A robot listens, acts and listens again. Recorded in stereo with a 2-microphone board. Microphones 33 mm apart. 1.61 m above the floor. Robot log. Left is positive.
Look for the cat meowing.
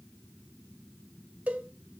cmd idle
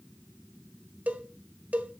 cmd idle
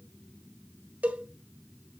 end: I can't make out a cat meowing to turn to.